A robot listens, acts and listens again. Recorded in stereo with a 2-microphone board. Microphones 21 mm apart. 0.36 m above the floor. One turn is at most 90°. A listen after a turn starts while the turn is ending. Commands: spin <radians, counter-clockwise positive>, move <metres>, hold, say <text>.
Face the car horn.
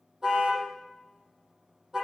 spin -0.52
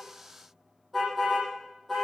say Facing the car horn, over 4 m away.